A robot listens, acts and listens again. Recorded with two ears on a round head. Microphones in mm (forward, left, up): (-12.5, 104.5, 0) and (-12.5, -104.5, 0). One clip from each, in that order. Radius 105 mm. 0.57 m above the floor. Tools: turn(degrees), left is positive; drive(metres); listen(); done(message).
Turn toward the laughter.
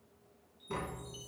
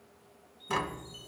listen()
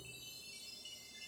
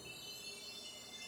listen()
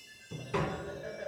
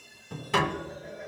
turn(degrees=70)
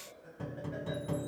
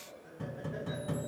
turn(degrees=35)
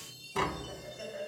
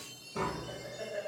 done("Facing the laughter.")